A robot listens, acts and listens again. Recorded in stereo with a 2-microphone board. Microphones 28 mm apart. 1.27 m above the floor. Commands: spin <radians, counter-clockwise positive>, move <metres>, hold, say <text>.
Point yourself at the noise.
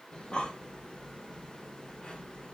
spin 0.52
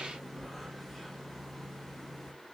say Found it: breathing, straight ahead, under 1 m away.